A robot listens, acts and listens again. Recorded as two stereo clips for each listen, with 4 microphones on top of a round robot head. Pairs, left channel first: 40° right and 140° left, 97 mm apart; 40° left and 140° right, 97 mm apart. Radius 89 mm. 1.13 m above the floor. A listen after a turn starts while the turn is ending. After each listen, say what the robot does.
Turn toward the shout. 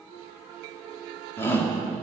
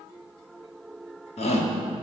Turn 25° left.
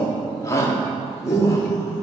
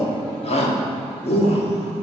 Turn 20° left.
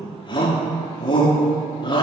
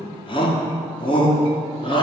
Facing the shout, 2 to 4 m away.